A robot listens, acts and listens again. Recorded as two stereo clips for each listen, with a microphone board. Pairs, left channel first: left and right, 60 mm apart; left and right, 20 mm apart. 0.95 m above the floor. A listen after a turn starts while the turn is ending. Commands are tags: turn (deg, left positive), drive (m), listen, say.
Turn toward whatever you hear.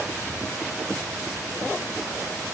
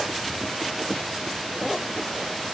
<listen/>
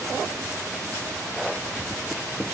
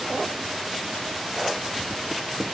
<listen/>
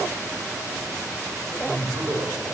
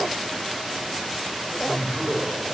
<turn deg="-50"/>
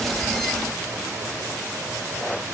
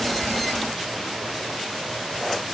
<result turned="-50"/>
<listen/>
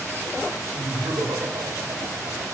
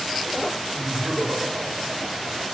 <turn deg="-75"/>
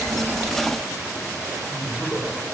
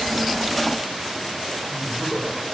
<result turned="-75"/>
<turn deg="15"/>
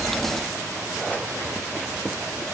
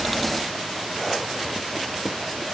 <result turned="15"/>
<listen/>
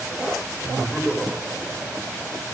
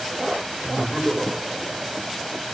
<say>Facing the laughter.</say>